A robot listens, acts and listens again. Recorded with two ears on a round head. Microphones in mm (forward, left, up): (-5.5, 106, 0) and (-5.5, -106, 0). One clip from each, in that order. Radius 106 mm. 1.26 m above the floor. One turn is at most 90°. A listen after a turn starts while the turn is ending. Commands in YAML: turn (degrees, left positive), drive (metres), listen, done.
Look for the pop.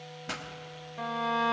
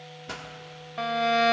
turn: 25
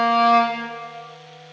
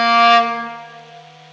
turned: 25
listen: true
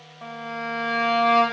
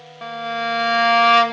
done: "I heard a pop, but can't make it out now. It was about straight ahead or 130° left."